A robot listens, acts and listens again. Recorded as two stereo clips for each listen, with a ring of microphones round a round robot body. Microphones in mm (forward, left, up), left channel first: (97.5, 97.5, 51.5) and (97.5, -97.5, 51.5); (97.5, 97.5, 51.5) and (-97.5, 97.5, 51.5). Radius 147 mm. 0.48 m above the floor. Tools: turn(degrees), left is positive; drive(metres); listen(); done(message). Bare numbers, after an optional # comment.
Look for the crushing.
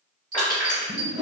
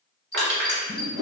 # The crushing: 160° left.
turn(160)
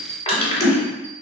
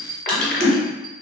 # The crushing is now 30° left.
turn(30)
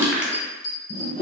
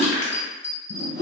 done("Found it: crushing, straight ahead.")